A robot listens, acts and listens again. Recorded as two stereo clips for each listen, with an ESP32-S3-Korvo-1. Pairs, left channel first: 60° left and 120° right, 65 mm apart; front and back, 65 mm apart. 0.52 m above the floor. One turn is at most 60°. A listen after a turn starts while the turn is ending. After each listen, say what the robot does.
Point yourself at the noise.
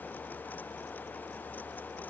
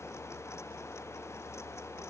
Keep listening.
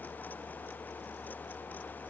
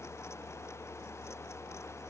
Keep listening.
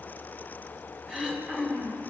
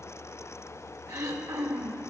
Turn 60° left.
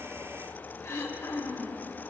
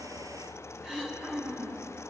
Turn 60° left.
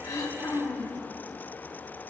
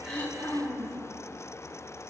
Turn 45° left.
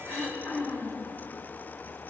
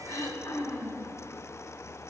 Facing the throat clearing.